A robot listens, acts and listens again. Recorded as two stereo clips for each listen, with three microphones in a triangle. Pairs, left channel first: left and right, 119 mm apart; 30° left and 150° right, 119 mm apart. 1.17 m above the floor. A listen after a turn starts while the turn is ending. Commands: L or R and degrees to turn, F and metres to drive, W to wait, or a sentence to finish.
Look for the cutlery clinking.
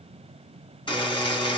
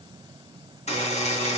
W
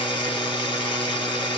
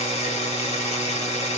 W
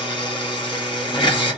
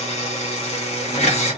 I can't make out cutlery clinking to turn to.